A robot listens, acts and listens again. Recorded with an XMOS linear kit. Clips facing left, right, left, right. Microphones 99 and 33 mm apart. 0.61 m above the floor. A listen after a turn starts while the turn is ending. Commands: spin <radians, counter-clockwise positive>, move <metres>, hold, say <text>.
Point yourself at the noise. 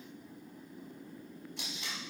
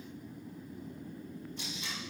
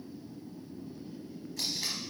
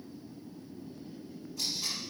spin 1.57
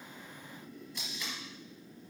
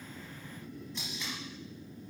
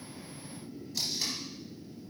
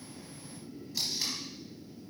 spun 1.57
say Facing the tape being pulled.